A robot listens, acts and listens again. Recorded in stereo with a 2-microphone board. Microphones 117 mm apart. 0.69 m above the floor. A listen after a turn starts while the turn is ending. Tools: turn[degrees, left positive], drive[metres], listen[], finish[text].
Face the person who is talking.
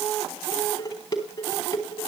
Action: listen[]
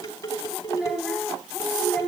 Action: turn[-30]
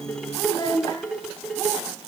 Thought: So it is at 25° left.
Action: turn[25]
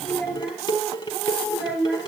Thought: The child speaking is now 10° right.
Action: turn[-10]
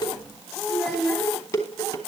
Action: finish[Facing the child speaking, over 4 m away.]